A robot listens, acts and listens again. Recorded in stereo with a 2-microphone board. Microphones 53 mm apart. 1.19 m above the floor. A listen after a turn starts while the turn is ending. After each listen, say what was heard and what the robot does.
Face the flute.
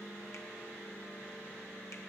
Keep listening.
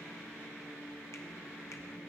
Keep listening.
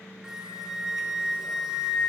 Turn 30° right.
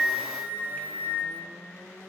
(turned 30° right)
So it is at 140° right. Turn 140° right.
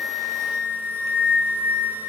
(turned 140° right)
The flute is now 35° right. Turn 35° right.
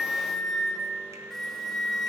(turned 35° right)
The flute is now 10° left. Turn 10° left.
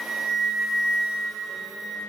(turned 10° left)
Found it: a flute, straight ahead.